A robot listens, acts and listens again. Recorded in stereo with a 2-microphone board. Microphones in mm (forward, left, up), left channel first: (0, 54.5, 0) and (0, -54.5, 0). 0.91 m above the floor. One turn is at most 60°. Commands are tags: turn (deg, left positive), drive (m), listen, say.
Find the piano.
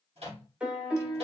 <turn deg="-30"/>
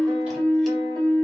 <turn deg="-60"/>
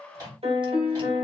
<turn deg="-60"/>
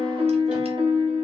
<turn deg="-60"/>
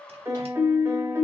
<turn deg="-25"/>
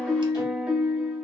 <turn deg="-10"/>
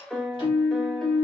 <say>Found it: a piano, straight ahead.</say>